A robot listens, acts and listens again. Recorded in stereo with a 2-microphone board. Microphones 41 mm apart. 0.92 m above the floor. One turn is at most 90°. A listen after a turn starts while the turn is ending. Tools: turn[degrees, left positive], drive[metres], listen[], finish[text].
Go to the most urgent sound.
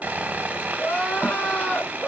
Thought: The crying: about 45° left or 135° left.
Action: turn[45]
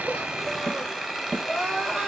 Action: drive[1.0]
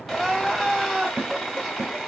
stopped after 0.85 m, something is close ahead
Action: finish[I am next to the crying.]